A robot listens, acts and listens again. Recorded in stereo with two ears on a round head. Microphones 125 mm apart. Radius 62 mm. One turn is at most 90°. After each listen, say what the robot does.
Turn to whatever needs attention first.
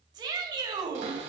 Turn 30° right.
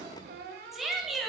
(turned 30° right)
Facing the shout, 1 to 2 m away.